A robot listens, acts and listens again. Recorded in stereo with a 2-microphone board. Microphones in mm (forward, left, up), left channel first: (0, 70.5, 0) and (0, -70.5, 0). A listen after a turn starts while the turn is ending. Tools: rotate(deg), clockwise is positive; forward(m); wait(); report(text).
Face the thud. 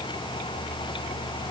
wait()
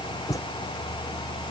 rotate(-20)
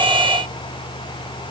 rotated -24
wait()
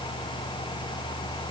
report("I heard a thud, but can't make it out now. It was about straight ahead or 135° left.")